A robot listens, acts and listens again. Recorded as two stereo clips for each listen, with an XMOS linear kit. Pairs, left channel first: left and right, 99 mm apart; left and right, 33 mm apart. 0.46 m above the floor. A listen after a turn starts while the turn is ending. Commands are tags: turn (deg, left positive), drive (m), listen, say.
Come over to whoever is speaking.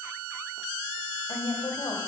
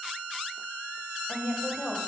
<turn deg="55"/>
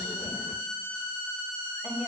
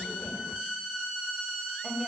<turn deg="15"/>
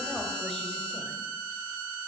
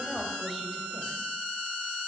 <listen/>
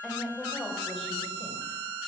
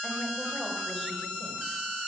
<drive m="1.0"/>
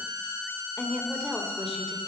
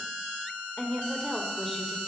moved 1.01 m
<drive m="1.0"/>
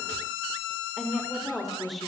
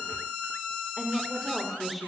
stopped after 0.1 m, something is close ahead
<say>I am next to the woman speaking.</say>